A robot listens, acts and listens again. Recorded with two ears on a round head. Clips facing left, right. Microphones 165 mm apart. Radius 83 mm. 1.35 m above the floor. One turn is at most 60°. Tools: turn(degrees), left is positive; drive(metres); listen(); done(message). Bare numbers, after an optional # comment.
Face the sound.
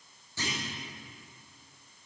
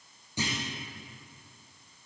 # The clunk: about 15° right or 165° right.
turn(-15)
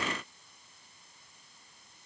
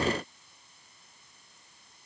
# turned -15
listen()
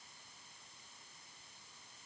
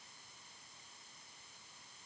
done("I heard a clunk, but can't make it out now. It was about straight ahead or 150° right.")